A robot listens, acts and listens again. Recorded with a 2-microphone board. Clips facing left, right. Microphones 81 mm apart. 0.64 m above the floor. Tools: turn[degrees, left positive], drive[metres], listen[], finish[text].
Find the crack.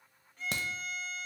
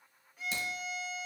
Thought: The crack: about 65° left or 115° left.
Action: turn[65]
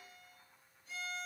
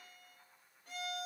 Action: listen[]
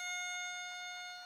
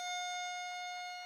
Action: finish[I heard a crack, but can't make it out now. It was about straight ahead or 50° left.]